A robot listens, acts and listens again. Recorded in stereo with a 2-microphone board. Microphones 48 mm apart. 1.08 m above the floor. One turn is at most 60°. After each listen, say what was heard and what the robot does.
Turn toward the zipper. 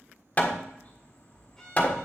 Keep listening.
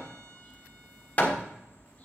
Keep listening.
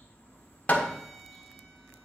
I can't make out a zipper, only a violin and hammering.